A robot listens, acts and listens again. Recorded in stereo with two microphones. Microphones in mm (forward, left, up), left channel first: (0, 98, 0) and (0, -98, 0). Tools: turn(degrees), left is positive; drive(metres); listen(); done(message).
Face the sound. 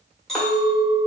turn(degrees=30)
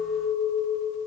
turn(degrees=150)
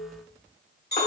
turn(degrees=55)
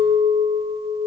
done("Facing the clink, 1 to 2 m away.")